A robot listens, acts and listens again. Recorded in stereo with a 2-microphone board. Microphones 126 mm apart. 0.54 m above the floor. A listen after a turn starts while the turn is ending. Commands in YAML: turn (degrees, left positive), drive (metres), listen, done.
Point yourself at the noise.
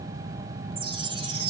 turn: -45
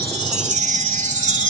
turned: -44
turn: -90
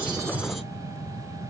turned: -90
listen: true
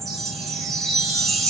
done: "Facing the chime."